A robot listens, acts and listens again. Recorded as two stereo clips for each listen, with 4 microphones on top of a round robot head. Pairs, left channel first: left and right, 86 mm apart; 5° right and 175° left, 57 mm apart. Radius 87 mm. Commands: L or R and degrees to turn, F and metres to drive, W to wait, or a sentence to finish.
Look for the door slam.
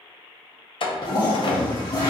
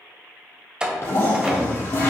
L100
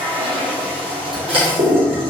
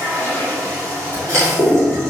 Facing where the door slam came from. I can't hear it now.